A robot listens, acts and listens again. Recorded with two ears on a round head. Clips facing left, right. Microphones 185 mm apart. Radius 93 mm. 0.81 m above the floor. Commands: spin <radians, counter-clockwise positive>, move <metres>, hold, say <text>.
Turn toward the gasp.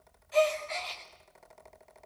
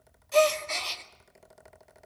spin -1.05
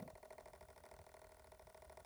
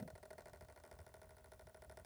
hold
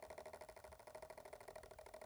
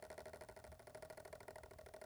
say I heard a gasp, but can't make it out now. It was about straight ahead or 60° right.